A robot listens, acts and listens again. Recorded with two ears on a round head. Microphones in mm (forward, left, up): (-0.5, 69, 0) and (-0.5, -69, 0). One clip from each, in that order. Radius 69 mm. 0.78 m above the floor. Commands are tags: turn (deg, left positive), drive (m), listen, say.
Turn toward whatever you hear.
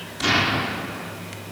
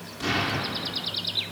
<turn deg="35"/>
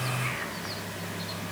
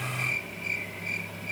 <listen/>
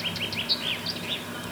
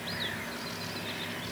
<say>I heard an explosion, but can't make it out now. It was about straight ahead or 110° left.</say>